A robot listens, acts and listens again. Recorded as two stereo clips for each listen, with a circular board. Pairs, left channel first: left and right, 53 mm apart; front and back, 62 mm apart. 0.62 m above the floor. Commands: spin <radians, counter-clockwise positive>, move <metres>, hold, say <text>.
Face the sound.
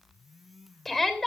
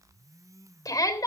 say Found it: a shout, straight ahead.